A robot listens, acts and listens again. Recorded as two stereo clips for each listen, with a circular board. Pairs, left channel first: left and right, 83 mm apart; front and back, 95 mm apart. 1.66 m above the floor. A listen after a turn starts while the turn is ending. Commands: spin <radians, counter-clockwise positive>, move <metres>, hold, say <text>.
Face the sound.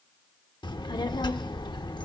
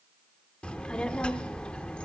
spin 1.31
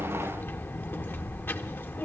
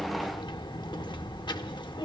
spin 0.44
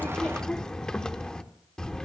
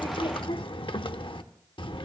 spin 0.17
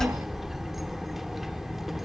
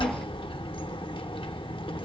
say Found it: a child speaking, straight ahead, under 1 m away.